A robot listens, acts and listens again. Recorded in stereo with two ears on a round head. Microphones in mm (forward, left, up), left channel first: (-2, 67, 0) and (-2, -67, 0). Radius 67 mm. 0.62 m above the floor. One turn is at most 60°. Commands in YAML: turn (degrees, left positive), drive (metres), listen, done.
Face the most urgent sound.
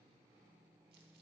listen: true
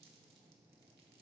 listen: true
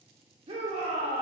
turn: -40
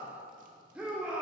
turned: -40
turn: -10
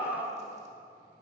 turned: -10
done: "Found it: a shout, straight ahead."